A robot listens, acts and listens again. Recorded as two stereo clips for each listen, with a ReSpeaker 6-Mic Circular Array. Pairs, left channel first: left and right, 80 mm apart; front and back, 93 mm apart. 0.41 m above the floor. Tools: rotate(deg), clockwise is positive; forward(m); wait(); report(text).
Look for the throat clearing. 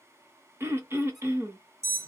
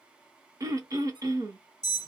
rotate(140)
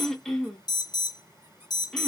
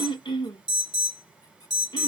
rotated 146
report("Found it: throat clearing, straight ahead, 1 to 2 m away.")